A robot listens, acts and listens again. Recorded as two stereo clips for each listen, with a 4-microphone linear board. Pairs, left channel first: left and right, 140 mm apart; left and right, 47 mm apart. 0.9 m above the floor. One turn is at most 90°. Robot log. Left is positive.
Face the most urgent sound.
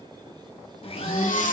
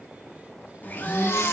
note: The baby crying: about 70° left or 110° left.
cmd yaw +70
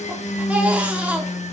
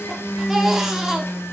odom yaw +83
note: So it is at 10° right.
cmd yaw -10
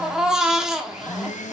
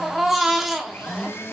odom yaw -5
end: Found it: a baby crying, straight ahead.